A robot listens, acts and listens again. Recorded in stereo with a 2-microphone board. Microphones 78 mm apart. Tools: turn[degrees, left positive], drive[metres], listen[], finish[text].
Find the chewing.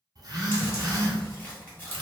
Thought: The chewing: about 25° left or 155° left.
Action: turn[25]
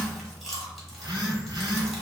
Action: finish[Found it: chewing, straight ahead.]